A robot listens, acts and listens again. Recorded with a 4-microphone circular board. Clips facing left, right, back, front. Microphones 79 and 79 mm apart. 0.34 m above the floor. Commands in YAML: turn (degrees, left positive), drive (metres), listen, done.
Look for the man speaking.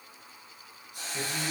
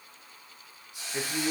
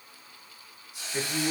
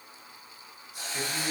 turn: -130
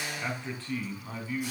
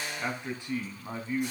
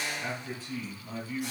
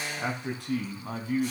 turn: -25
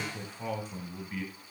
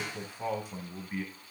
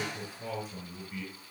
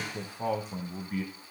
turn: -20
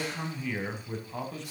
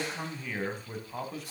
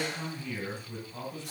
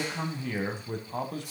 done: "Facing the man speaking, 1 to 2 m away."